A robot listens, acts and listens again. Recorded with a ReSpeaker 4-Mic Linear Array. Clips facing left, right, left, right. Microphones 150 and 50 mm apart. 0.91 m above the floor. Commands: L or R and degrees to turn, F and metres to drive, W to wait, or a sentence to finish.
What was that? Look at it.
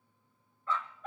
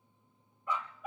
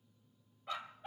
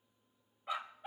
R30
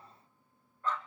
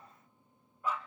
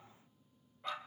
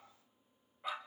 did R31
R30
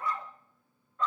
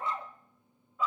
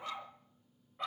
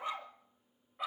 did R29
R30
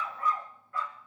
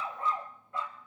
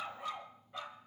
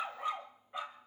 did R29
R20
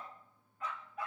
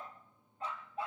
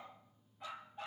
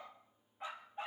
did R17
R155
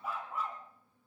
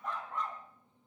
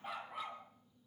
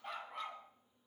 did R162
Found it: a dog barking, straight ahead, 2 to 4 m away.